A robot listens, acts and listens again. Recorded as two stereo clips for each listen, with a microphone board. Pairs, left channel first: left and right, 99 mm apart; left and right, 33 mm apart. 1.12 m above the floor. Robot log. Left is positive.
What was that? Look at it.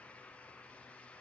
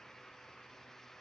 cmd idle
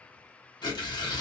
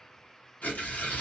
note: The tearing paper: about 45° left or 135° left.
cmd yaw +45
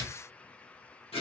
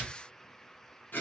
note: So it is at 90° left.
cmd yaw +90
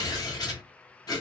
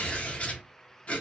note: The tearing paper is now 40° left.
cmd yaw +40
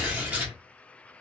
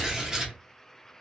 note: The tearing paper is now 15° right.
cmd yaw -15
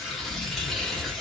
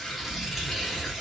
end: Found it: tearing paper, straight ahead, under 1 m away.